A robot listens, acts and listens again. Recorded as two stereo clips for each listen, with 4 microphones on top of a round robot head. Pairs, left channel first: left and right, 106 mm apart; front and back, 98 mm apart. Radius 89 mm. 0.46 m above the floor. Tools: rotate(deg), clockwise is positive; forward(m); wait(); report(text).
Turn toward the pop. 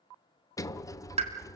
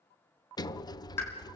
rotate(70)
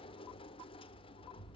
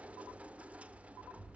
report("I heard a pop from this way, but can't make it out now.")